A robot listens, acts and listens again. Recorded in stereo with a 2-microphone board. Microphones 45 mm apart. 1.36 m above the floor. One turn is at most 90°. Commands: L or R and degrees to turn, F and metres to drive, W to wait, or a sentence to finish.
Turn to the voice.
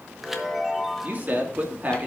R40
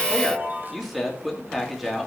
Found it: a man speaking, straight ahead, 2 to 4 m away.